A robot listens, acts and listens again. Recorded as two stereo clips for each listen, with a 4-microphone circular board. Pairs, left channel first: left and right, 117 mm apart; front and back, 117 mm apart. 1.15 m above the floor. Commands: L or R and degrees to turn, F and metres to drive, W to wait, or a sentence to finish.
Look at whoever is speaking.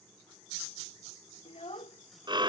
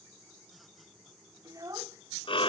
L120
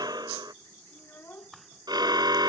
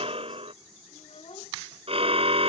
L20
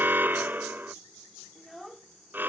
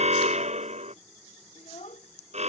Found it: a child speaking, straight ahead.